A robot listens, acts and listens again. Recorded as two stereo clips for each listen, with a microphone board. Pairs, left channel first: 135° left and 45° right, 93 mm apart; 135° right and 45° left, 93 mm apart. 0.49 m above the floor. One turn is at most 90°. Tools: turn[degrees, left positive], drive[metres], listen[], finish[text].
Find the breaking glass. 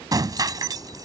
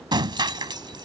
Action: finish[Found it: breaking glass, straight ahead.]